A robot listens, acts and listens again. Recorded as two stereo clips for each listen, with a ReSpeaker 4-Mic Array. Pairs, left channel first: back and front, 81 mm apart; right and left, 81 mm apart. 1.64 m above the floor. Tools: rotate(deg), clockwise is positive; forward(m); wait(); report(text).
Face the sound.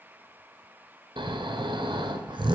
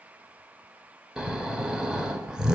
rotate(-10)
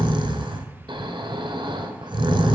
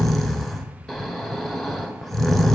report("Found it: snoring, straight ahead.")